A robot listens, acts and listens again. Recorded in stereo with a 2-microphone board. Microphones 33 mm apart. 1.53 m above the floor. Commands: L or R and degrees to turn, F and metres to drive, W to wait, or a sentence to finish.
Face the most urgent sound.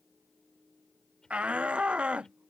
R40
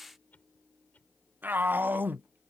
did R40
R100
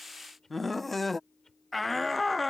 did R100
Found it: a shout, straight ahead.